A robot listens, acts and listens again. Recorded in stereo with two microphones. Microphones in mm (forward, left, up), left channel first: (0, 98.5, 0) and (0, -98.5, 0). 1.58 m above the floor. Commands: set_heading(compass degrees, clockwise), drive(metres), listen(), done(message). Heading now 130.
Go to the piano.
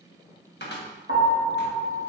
set_heading(65)
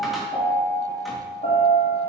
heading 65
set_heading(25)
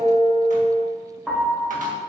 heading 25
drive(1.0)
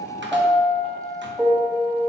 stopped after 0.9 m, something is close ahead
done("I am next to the piano.")